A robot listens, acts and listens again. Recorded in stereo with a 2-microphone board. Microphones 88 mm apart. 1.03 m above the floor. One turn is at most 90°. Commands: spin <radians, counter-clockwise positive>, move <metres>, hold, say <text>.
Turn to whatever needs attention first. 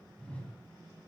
hold
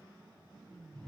hold
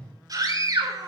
spin -0.79
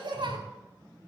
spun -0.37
spin -1.57
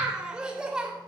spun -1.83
spin -0.17
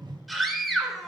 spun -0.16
say Facing the scream, 2 to 4 m away.